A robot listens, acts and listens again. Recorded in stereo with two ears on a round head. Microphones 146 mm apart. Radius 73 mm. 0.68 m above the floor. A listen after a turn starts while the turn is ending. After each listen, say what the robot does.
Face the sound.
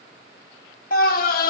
Turn 60° left.
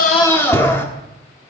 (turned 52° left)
Turn 15° left.
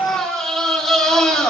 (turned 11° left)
Found it: a scream, straight ahead, 1 to 2 m away.